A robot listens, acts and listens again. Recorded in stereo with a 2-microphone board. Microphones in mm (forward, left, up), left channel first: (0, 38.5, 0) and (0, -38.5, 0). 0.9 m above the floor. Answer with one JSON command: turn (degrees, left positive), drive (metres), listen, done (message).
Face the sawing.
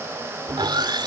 {"turn": -75}
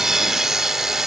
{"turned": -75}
{"done": "Found it: sawing, straight ahead."}